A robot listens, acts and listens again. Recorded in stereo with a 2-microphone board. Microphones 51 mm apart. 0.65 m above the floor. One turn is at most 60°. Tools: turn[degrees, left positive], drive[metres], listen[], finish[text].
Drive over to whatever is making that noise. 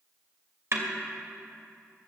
Thought: The snare drum: about 55° right or 125° right.
Action: turn[-55]
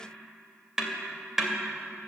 Action: drive[1.0]
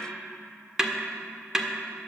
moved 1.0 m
Thought: The snare drum is now 10° right.
Action: turn[-10]
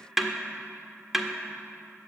Action: drive[1.0]
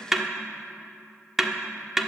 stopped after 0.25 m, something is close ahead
Action: finish[Arrived at the snare drum, straight ahead.]